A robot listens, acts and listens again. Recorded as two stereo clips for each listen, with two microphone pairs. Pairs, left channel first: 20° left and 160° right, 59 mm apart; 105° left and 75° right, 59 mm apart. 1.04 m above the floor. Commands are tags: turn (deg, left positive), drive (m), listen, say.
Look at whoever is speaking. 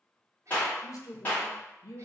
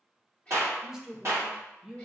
<say>Found it: a woman speaking, straight ahead, under 1 m away.</say>